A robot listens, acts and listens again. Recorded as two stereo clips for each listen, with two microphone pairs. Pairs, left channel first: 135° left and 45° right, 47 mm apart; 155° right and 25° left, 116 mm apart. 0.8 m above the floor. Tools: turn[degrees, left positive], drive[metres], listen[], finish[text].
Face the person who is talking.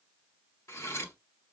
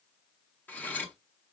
Action: listen[]
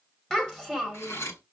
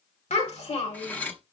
Thought: The child speaking: 140° right.
Action: turn[-140]
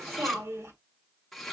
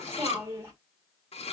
Thought: The child speaking is now 45° right.
Action: turn[-45]
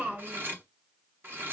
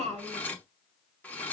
Action: finish[Found it: a child speaking, straight ahead, 1 to 2 m away.]